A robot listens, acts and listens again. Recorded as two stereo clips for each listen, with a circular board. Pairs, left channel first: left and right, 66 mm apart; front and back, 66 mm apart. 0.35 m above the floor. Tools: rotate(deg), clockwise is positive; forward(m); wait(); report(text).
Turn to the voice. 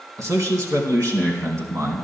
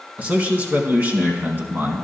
rotate(120)
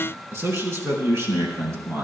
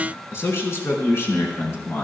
rotate(45)
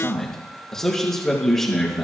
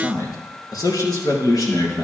report("Facing the man speaking, over 4 m away.")